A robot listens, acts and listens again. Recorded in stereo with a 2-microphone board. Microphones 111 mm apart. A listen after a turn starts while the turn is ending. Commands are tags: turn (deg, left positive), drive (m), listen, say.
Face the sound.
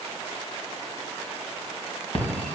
<turn deg="65"/>
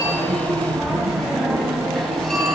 <say>Facing the phone ringing, 2 to 4 m away.</say>